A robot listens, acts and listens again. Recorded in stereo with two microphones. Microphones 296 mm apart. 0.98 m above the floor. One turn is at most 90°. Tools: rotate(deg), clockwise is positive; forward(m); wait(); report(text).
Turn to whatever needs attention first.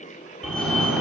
rotate(-30)
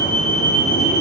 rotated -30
rotate(-90)
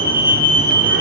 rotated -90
rotate(-45)
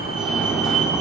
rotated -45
report("Facing the fire alarm, over 4 m away.")